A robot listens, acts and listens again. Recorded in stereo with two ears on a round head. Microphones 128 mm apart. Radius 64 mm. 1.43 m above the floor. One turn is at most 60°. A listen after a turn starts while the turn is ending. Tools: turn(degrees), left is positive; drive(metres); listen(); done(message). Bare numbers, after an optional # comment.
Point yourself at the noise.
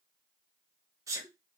# The sneeze: about 20° right or 160° right.
turn(-20)
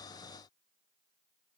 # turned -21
listen()
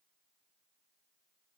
done("I heard a sneeze, but can't make it out now. It was about straight ahead or 135° right.")